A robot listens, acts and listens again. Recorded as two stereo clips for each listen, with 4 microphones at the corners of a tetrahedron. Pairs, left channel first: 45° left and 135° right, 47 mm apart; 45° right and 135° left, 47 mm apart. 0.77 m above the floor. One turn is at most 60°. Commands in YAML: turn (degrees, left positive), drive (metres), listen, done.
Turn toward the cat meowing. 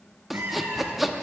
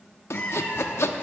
turn: -60
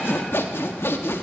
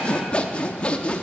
turn: -35
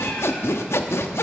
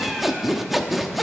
listen: true
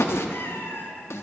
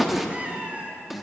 turn: 60
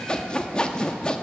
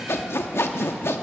turn: 20
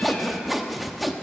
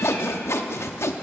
listen: true
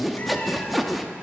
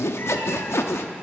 done: "I heard a cat meowing from this way, but can't make it out now."